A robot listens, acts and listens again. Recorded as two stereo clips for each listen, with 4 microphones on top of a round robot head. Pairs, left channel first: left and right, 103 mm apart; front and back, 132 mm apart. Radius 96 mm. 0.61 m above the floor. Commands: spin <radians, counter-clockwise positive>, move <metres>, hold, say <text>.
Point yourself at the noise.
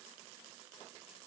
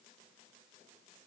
hold
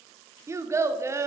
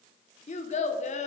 spin -0.52
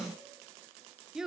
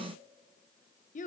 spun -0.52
say Facing the child speaking, 1 to 2 m away.